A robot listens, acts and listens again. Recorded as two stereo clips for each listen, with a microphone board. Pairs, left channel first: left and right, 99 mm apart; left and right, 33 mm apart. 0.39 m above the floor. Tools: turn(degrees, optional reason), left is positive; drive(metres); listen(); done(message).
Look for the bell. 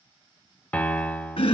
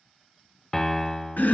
listen()
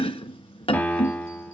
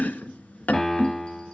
listen()
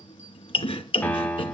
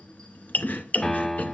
done("I can't make out a bell, only a piano and chopping.")